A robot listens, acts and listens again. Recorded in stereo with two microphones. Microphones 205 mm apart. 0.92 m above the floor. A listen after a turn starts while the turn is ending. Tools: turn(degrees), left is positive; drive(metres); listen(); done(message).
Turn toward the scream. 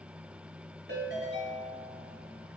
listen()
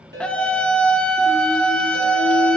turn(degrees=30)
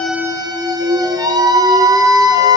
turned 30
turn(degrees=-25)
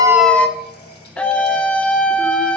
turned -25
done("Found it: a scream, straight ahead, under 1 m away.")